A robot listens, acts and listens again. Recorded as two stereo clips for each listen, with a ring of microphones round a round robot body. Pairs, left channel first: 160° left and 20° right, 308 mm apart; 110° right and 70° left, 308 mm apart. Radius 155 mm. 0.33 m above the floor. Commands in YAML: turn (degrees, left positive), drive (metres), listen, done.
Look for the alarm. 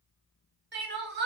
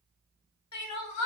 listen: true
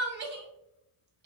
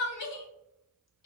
listen: true
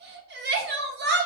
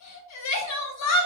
done: "I can't make out an alarm, only crying."